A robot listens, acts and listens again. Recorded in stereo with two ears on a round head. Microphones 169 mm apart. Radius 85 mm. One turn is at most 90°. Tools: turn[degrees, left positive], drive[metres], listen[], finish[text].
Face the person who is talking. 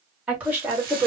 Action: turn[-30]
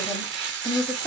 Action: finish[Facing the woman speaking, 1 to 2 m away.]